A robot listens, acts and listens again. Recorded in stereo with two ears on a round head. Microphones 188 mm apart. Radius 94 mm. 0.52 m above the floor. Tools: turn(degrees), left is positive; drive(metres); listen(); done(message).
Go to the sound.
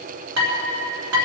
turn(degrees=-60)
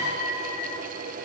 listen()
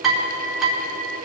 drive(metres=1.0)
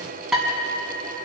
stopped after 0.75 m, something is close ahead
done("Blocked. The dishes clattering is further on, straight ahead.")